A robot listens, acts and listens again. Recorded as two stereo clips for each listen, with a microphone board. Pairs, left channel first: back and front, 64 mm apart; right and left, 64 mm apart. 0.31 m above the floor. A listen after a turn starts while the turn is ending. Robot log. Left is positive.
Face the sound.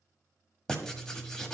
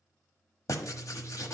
note: The writing: 100° right.
cmd yaw -100
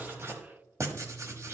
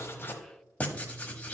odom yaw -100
note: The writing is now 25° right.
cmd yaw -25
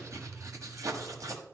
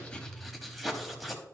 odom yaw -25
end: Found it: writing, straight ahead, 1 to 2 m away.